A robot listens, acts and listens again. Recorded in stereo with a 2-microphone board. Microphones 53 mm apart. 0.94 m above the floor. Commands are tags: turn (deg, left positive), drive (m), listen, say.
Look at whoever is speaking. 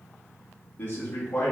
<turn deg="35"/>
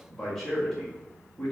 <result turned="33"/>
<say>Found it: a man speaking, straight ahead, 1 to 2 m away.</say>